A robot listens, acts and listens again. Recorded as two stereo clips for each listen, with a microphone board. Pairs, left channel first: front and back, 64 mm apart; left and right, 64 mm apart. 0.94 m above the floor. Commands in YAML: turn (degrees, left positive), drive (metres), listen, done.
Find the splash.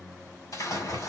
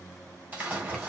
turn: -25
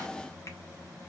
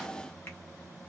done: "I heard a splash from this way, but can't make it out now."